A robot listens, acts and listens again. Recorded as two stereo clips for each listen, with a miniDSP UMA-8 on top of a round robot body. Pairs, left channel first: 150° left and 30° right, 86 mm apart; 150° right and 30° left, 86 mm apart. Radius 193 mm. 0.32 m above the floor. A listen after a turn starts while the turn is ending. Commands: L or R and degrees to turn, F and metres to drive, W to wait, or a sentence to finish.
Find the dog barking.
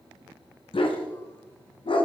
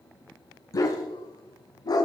L165
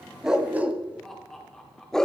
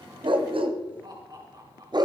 L70
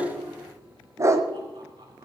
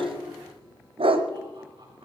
L30
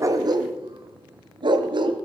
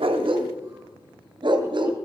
Facing the dog barking, 1 to 2 m away.